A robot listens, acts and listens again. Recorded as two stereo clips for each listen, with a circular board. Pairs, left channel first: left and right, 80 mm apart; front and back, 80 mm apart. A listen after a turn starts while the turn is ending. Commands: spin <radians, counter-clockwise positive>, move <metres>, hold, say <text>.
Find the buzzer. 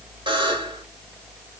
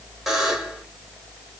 spin -1.57
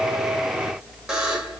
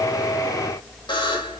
say Found it: a buzzer, straight ahead, 1 to 2 m away.